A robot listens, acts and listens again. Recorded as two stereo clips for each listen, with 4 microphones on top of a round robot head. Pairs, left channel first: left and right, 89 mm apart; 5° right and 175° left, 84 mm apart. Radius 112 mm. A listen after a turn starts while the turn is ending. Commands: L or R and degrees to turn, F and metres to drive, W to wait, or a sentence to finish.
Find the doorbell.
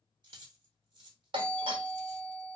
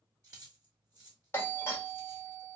R70
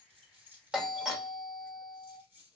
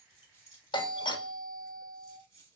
R10
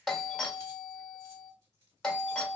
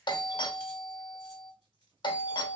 Facing the doorbell.